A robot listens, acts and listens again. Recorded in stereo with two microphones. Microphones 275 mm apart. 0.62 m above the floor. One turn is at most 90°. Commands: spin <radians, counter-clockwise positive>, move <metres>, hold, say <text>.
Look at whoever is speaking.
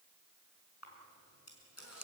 hold
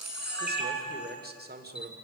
spin -0.61
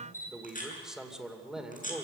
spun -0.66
say Facing the man speaking.